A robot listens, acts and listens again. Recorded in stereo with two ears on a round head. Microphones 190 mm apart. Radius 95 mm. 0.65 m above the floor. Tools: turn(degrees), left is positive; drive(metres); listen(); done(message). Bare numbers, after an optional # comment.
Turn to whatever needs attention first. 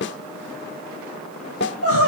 # The crying: about 70° right or 110° right.
turn(-70)
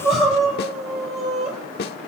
done("Facing the crying.")